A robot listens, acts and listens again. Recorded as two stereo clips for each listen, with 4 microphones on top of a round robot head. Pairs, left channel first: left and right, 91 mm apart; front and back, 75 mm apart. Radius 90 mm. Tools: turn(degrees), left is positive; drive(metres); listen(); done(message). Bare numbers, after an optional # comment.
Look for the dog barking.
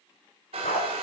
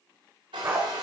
# The dog barking: 120° left.
turn(120)
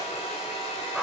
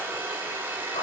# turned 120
done("Found it: a dog barking, straight ahead, 2 to 4 m away.")